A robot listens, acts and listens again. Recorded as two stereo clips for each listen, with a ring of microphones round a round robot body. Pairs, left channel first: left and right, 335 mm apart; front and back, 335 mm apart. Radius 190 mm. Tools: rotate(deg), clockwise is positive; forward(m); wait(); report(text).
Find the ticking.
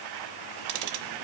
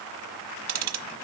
rotate(135)
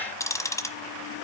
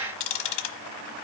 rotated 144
rotate(-10)
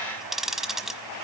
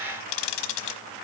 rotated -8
report("Found it: ticking, straight ahead, 1 to 2 m away.")